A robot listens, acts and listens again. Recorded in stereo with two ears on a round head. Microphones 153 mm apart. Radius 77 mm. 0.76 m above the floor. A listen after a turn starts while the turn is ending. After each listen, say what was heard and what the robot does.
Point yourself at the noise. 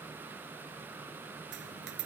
Turn 90° right.
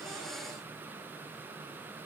Facing where the dropped coin came from. I can't hear it now.